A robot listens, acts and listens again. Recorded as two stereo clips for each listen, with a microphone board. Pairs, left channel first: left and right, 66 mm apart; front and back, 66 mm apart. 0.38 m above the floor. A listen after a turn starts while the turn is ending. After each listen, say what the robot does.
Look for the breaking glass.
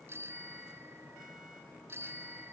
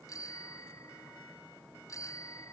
Keep listening.
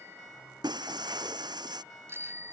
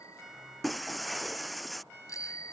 Turn 90° right.
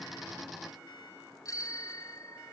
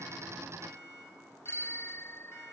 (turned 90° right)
Facing where the breaking glass came from. I can't hear it now.